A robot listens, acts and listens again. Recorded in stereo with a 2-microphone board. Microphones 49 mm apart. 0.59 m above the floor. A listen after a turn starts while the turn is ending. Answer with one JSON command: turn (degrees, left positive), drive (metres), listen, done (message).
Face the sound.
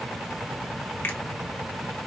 {"turn": 45}
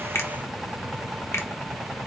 {"turn": 85}
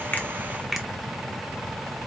{"done": "Found it: a finger snap, straight ahead."}